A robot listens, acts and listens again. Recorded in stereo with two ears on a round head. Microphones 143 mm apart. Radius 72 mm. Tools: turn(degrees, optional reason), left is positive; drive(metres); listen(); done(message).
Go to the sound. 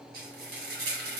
turn(degrees=-60, reason="The frying: about 60° right or 120° right.")
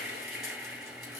drive(metres=1.0)
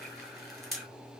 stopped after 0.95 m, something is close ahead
done("Arrived at the frying, straight ahead.")